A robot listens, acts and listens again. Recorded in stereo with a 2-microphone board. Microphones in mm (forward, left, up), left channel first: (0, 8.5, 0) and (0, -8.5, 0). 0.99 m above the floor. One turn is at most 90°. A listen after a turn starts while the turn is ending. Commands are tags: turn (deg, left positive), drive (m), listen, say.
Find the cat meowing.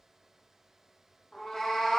<turn deg="40"/>
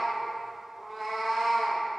<say>Facing the cat meowing, under 1 m away.</say>